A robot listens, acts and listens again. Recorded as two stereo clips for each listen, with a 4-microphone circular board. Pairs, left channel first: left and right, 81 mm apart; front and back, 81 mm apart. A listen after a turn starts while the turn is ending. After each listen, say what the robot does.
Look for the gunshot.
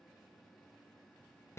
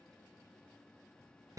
Keep listening.
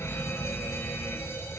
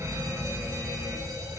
Keep listening.
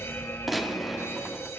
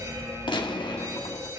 Facing the gunshot.